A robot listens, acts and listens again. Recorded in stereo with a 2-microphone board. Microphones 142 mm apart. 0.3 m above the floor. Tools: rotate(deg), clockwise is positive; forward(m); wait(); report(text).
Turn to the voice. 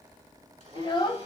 rotate(-35)
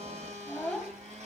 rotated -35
report("Found it: a child speaking, straight ahead, under 1 m away.")